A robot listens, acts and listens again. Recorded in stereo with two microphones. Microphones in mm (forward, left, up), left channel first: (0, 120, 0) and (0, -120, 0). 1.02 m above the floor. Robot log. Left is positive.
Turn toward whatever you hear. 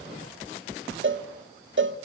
note: The cowbell: about 55° right or 125° right.
cmd yaw -55
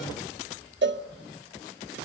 note: So it is at 60° right.
cmd yaw -60
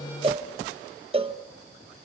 note: The cowbell is now 25° right.
cmd yaw -25
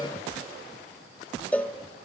end: Found it: a cowbell, straight ahead.